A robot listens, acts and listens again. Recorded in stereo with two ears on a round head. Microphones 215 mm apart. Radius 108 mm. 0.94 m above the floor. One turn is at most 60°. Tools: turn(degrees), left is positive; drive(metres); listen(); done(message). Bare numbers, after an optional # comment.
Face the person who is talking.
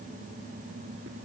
listen()
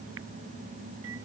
listen()
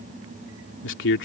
# The man speaking: about 50° left or 130° left.
turn(50)
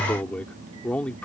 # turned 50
done("Found it: a man speaking, straight ahead.")